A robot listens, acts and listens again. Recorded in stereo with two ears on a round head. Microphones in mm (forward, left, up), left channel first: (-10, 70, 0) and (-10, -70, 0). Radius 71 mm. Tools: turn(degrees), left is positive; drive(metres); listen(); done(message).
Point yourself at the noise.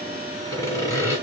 turn(degrees=20)
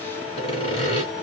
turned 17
turn(degrees=145)
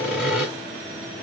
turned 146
done("Facing the sawing, 1 to 2 m away.")